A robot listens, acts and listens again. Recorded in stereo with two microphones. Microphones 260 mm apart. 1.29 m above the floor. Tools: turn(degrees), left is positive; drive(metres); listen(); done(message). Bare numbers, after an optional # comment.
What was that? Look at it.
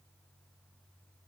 listen()
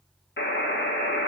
# The buzzer: about 45° left or 135° left.
turn(45)
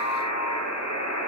# So it is at 90° left.
turn(90)
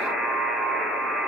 done("Facing the buzzer, 1 to 2 m away.")